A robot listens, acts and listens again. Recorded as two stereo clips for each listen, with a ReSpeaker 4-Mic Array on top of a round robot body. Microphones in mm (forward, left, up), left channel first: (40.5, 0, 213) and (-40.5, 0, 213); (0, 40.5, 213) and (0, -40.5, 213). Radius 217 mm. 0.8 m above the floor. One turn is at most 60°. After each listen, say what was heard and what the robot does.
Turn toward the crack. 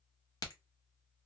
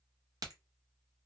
The crack: 45° right. Turn 45° right.
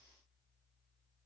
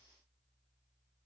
I heard a crack from this way, but can't make it out now.